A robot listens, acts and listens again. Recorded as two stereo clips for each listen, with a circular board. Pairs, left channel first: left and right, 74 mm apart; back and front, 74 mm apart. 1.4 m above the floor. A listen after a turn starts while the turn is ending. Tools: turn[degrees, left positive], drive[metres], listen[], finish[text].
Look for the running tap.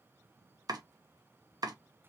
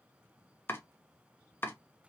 Action: listen[]
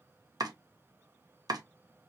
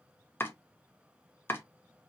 Action: listen[]
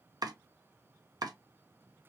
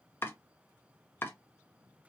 Action: finish[I can't make out a running tap to turn to.]